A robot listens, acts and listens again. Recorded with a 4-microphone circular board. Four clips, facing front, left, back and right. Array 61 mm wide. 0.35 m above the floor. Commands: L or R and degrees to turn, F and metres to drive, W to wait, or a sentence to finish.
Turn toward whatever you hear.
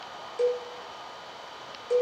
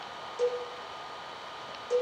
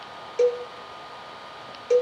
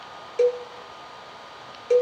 R120
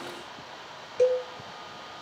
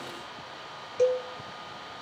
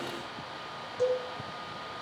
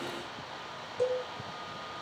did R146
L30
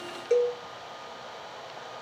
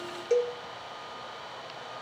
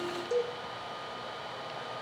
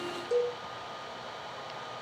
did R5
L30
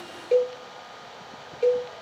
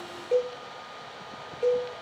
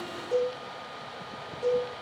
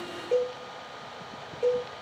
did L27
Found it: a cowbell, straight ahead.